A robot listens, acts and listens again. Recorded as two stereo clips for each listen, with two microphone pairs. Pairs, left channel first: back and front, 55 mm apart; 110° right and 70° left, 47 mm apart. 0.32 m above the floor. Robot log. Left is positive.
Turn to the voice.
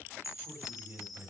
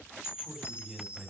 note: The man speaking: 15° right.
cmd yaw -15
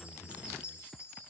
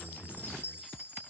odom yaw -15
cmd idle
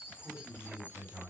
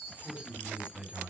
end: Found it: a man speaking, straight ahead, 2 to 4 m away.